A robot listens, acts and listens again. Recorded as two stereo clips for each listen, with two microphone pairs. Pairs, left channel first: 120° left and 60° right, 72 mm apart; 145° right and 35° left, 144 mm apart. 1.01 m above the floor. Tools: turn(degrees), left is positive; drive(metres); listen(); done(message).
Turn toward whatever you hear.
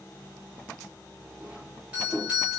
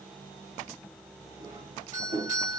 turn(degrees=10)
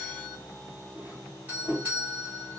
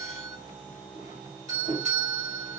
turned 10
done("Facing the doorbell, 2 to 4 m away.")